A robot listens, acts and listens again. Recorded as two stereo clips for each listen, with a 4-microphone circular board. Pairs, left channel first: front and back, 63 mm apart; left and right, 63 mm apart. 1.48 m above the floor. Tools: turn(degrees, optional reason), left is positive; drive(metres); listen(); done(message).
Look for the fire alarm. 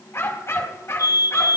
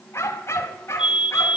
turn(degrees=-15, reason="The fire alarm: 15° right.")
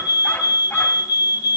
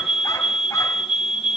done("Found it: a fire alarm, straight ahead.")